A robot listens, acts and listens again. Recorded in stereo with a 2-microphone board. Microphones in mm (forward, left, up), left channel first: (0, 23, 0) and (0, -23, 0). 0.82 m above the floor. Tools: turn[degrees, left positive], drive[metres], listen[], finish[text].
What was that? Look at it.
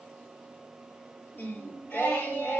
Thought: The singing: about 65° left or 115° left.
Action: turn[65]
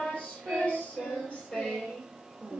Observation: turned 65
Thought: So it is at 25° left.
Action: turn[25]
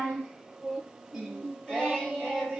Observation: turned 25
Action: finish[Facing the singing, over 4 m away.]